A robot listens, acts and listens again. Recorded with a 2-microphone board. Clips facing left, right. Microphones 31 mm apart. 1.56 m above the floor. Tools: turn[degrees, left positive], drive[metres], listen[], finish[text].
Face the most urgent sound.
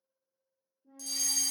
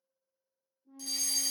Thought: The fire alarm: about 15° right or 165° right.
Action: turn[-15]
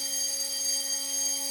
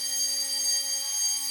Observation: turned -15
Action: finish[Facing the fire alarm, under 1 m away.]